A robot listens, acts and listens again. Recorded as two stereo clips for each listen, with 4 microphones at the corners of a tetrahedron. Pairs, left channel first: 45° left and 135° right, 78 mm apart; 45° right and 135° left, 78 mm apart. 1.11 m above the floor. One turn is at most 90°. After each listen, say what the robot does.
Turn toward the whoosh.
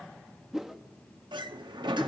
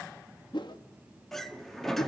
Turn 50° right.
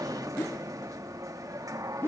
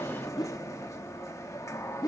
Turn 15° right.
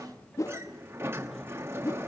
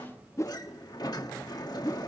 Found it: a whoosh, straight ahead, under 1 m away.